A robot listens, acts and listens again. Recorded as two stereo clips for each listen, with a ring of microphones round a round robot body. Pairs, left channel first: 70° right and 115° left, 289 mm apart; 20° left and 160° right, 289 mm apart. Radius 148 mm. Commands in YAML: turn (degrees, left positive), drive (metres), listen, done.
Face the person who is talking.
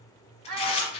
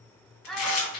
turn: 110
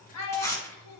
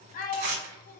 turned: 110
turn: -40
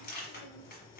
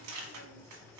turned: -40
listen: true
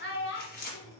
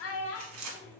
turn: -15
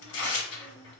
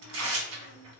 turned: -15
listen: true
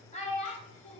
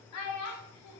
done: "Facing the child speaking."